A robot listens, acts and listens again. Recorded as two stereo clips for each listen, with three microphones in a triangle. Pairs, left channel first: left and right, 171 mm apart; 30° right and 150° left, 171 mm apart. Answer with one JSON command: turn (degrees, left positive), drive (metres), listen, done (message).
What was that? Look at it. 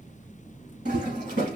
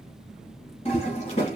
{"turn": -80}
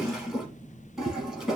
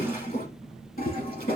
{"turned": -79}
{"done": "Found it: a toilet flushing, straight ahead."}